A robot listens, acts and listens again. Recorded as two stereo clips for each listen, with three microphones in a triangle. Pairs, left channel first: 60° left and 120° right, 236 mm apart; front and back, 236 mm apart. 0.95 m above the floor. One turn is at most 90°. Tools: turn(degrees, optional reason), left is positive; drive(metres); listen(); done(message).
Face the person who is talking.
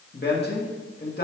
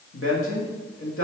turn(degrees=15, reason="The man speaking: 15° left.")
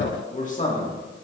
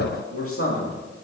done("Found it: a man speaking, straight ahead.")